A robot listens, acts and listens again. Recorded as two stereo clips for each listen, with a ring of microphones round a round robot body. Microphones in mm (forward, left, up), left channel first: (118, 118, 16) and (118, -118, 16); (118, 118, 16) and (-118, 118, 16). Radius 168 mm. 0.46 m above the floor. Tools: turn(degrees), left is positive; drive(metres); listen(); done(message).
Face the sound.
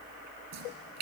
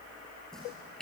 turn(degrees=-90)
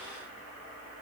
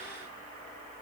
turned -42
turn(degrees=-45)
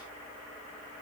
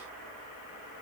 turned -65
turn(degrees=20)
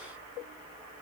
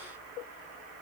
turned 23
done("I heard a splash from this way, but can't make it out now.")